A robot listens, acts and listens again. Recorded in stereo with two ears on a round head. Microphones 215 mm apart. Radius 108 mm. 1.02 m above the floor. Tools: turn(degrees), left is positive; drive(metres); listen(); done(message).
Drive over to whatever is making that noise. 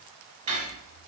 turn(degrees=-30)
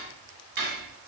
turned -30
turn(degrees=-120)
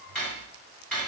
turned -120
drive(metres=1.0)
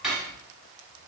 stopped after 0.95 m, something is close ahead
done("Arrived at the cutlery clinking, straight ahead.")